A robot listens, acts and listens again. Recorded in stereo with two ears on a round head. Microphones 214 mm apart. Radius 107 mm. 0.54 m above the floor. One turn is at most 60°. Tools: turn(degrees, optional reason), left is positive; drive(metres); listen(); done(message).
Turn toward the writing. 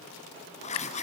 turn(degrees=30, reason="The writing: about 30° left or 150° left.")
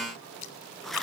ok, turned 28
done("Facing the writing, 1 to 2 m away.")